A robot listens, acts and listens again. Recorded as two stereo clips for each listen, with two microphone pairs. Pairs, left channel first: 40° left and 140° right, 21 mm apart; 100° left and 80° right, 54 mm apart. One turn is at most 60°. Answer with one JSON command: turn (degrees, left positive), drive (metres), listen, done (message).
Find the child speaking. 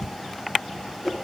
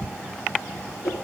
{"listen": true}
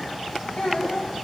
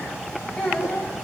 {"turn": 15}
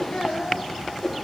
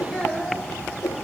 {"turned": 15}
{"done": "Facing the child speaking, 2 to 4 m away."}